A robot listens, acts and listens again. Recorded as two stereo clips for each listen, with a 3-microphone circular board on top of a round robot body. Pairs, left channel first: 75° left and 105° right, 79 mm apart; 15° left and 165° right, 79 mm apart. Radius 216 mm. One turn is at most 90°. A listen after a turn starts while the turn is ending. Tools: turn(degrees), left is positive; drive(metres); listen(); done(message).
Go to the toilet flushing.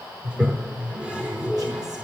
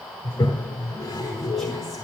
turn(degrees=-30)
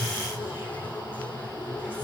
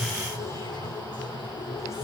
drive(metres=1.0)
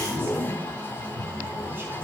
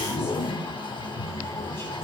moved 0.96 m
turn(degrees=15)
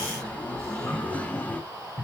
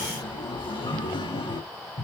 drive(metres=1.0)
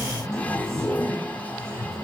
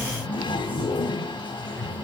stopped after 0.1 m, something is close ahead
done("Arrived at the toilet flushing, straight ahead.")